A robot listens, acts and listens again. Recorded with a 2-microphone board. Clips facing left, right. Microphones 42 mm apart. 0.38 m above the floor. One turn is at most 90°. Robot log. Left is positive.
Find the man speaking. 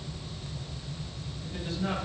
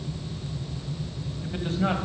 note: The man speaking: about 45° right or 135° right.
cmd yaw -45
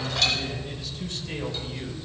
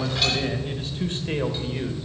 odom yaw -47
note: So it is at 25° right.
cmd yaw -25
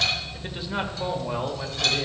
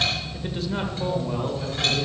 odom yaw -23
note: The man speaking is now 40° left.
cmd yaw +40
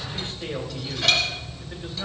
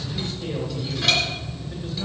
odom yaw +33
note: The man speaking is now 30° left.
cmd yaw +30
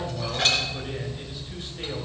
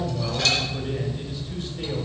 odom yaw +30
note: The man speaking is now 10° left.
cmd yaw +10
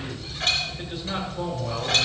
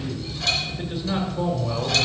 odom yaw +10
end: Found it: a man speaking, straight ahead.